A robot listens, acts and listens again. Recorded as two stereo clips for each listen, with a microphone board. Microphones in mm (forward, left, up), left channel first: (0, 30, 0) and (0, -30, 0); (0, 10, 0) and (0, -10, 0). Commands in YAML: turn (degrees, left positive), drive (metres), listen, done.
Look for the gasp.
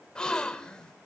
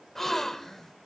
turn: 30
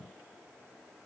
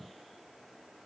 listen: true
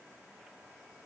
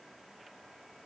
done: "I heard a gasp, but can't make it out now. It was about 15° right or 135° left."